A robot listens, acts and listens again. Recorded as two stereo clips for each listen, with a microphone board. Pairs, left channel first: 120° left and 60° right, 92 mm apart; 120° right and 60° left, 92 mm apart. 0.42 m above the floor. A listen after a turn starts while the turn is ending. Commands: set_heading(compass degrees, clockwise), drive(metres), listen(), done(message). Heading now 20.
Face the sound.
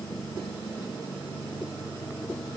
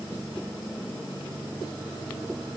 listen()
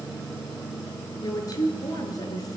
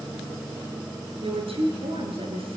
set_heading(305)
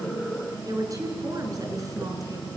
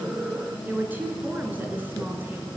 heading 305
set_heading(315)
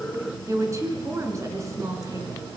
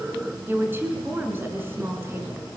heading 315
done("Found it: a woman speaking, straight ahead.")